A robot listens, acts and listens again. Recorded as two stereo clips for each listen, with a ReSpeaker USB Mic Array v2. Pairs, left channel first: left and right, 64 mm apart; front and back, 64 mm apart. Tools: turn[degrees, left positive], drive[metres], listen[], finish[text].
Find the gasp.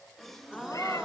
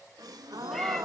Thought: The gasp: 175° left.
Action: turn[175]
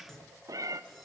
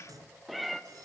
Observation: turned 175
Action: finish[Facing where the gasp came from. I can't hear it now.]